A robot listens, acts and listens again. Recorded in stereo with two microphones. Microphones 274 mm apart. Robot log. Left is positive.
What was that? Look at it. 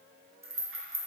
note: The rattle: about 50° right or 130° right.
cmd yaw -50
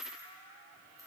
note: So it is at 15° right.
cmd yaw -15
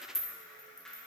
end: Facing the rattle.